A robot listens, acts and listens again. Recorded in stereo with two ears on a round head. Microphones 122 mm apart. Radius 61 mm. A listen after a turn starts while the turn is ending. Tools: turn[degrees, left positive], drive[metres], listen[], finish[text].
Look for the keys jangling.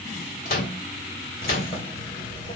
Thought: The keys jangling: about 40° left or 140° left.
Action: turn[40]
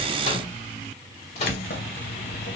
Thought: So it is at 100° left.
Action: turn[100]
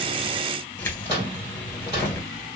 Thought: The keys jangling is now 15° left.
Action: turn[15]
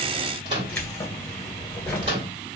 Action: finish[Facing the keys jangling, 2 to 4 m away.]